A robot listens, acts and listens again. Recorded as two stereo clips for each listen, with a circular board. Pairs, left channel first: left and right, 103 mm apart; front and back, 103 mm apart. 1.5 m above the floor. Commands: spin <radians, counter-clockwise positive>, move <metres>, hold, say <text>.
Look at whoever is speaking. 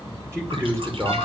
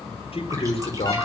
spin -0.52
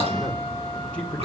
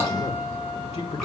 spin 0.17
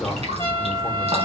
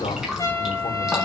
say Facing the man speaking.